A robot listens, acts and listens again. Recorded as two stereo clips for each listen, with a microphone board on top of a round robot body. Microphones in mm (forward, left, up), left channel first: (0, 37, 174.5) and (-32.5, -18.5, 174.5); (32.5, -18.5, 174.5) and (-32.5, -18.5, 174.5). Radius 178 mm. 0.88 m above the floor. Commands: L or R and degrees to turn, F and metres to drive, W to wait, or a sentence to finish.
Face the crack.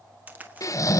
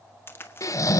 R55
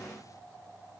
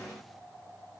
I heard a crack from this way, but can't make it out now.